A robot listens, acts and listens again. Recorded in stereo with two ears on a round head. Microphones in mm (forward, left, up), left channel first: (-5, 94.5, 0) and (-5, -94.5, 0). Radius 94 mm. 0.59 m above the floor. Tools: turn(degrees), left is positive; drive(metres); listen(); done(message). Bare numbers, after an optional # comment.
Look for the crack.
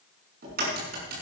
# The crack: about 45° right or 135° right.
turn(-45)
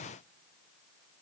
listen()
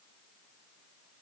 done("I heard a crack, but can't make it out now. It was about straight ahead or 90° right.")